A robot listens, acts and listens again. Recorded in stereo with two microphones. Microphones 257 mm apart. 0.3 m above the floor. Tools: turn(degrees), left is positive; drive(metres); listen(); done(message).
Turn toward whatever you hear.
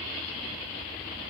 listen()
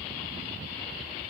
listen()
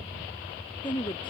turn(degrees=15)
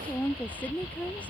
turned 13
done("Found it: a woman speaking, straight ahead.")